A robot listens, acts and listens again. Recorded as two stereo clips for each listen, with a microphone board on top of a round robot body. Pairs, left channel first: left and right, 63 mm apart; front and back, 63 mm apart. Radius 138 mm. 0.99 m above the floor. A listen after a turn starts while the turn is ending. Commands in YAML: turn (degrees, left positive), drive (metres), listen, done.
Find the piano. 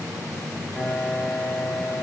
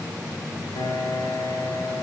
turn: 10
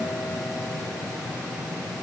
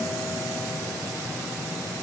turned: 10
listen: true
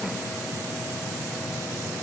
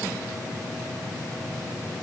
listen: true
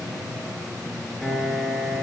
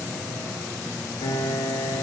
done: "Found it: a piano, straight ahead, 2 to 4 m away."